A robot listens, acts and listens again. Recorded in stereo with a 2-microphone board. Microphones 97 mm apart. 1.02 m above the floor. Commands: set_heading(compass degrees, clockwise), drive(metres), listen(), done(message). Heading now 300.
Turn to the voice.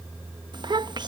set_heading(350)
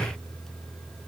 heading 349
listen()
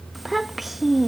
done("Found it: a child speaking, straight ahead.")